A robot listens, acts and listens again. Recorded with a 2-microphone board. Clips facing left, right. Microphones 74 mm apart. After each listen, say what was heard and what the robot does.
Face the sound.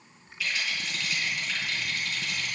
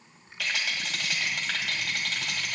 Turn 90° right.
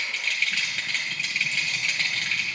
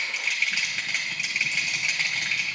So it is at 10° right. Turn 10° right.
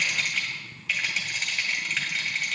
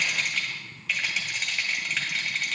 Facing the rattle.